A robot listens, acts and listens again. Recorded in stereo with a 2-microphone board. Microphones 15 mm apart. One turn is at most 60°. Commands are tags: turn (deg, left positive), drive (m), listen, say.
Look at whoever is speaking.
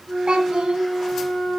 <turn deg="-60"/>
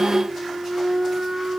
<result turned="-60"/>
<listen/>
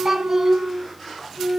<turn deg="-25"/>
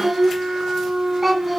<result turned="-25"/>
<turn deg="-10"/>
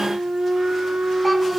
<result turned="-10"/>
<listen/>
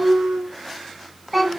<say>Found it: a child speaking, straight ahead.</say>